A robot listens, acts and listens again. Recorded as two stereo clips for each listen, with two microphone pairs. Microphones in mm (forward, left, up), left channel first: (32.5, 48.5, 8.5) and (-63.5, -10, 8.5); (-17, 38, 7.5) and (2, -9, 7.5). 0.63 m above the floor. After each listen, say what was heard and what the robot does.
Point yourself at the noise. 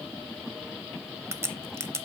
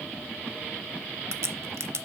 The crack: 85° right. Turn 85° right.
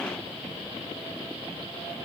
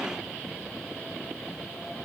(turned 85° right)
I heard a crack from this way, but can't make it out now.